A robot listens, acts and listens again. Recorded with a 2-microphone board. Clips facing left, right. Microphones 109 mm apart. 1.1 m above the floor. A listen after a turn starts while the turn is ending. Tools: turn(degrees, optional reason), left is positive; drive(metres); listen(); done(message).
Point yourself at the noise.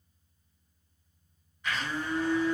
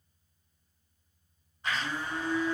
turn(degrees=-40, reason="The blender: about 40° right or 140° right.")
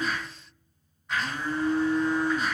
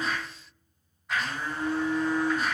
done("Found it: a blender, straight ahead, 1 to 2 m away.")